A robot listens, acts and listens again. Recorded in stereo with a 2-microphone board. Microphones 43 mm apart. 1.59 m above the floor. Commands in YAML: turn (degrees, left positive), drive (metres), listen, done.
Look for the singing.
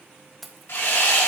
listen: true
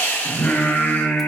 turn: 50
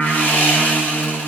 done: "Found it: singing, straight ahead."